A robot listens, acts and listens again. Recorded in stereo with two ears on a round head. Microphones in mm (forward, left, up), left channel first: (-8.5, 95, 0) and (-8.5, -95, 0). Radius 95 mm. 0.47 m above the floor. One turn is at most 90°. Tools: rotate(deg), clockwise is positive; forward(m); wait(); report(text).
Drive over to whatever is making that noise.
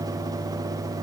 wait()
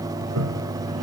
rotate(90)
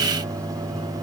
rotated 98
rotate(-10)
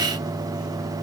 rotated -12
wait()
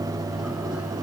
report("I heard a toilet flushing from this way, but can't make it out now. I did not reach it.")